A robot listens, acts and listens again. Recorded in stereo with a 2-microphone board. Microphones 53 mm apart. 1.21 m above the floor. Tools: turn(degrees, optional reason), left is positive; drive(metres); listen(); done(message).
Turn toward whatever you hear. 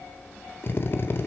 turn(degrees=45, reason="The drill: about 45° left or 135° left.")
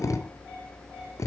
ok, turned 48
turn(degrees=85, reason="So it is at 85° left.")
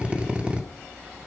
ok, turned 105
turn(degrees=-20, reason="The drill is now 20° right.")
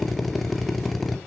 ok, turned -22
done("Found it: a drill, straight ahead, 1 to 2 m away.")